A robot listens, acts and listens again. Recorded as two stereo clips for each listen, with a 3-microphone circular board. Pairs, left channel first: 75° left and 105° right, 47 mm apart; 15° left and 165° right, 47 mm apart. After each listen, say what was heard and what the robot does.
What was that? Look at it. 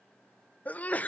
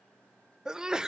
The sneeze: 125° left. Turn 125° left.
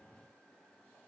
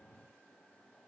Facing where the sneeze came from. I can't hear it now.